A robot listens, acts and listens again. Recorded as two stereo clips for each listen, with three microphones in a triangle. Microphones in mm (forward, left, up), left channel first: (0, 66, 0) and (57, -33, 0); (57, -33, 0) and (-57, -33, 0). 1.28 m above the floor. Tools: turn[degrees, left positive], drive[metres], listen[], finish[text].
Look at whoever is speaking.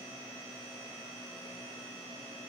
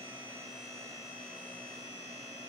Action: listen[]
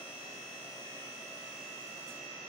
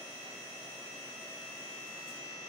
Action: listen[]
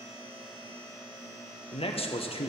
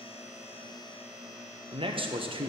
Thought: The man speaking: 145° left.
Action: turn[145]
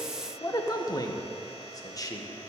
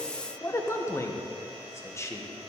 Thought: The man speaking is now 65° left.
Action: turn[65]
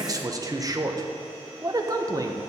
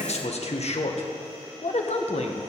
Action: finish[Found it: a man speaking, straight ahead.]